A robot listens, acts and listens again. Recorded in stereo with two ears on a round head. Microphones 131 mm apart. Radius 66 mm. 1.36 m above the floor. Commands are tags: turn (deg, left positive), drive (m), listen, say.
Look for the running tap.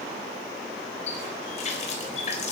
<turn deg="50"/>
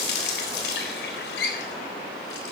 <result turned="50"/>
<turn deg="80"/>
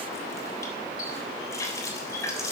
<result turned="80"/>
<turn deg="20"/>
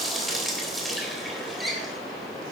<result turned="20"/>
<say>Found it: a running tap, straight ahead.</say>